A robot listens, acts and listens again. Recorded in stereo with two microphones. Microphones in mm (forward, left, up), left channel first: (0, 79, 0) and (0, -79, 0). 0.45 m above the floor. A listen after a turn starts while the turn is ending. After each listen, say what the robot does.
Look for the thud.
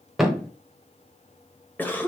Turn 30° left.
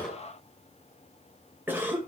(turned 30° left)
Keep listening.
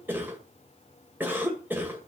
I heard a thud, but can't make it out now. It was about 30° right or 150° left.